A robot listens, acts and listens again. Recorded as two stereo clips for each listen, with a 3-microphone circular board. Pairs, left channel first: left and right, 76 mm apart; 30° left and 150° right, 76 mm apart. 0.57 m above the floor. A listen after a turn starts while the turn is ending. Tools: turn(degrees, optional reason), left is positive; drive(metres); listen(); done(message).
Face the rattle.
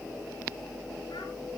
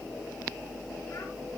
listen()
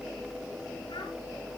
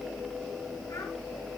listen()
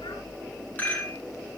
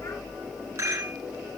turn(degrees=155, reason="The rattle: 155° left.")
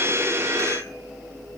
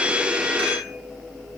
listen()
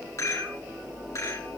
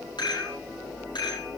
turn(degrees=40, reason="The rattle is now 40° left.")
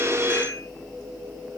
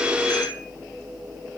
listen()
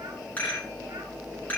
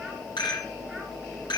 turn(degrees=20, reason="The rattle is now 20° left.")
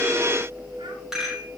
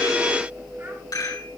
done("Found it: a rattle, straight ahead.")